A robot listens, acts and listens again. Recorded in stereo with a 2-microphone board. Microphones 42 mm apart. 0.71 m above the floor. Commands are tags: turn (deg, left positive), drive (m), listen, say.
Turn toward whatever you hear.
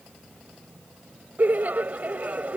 <turn deg="-40"/>
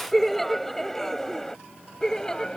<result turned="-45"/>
<turn deg="15"/>
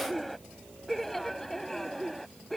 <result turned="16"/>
<turn deg="10"/>
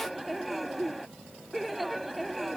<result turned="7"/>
<say>Facing the laughter.</say>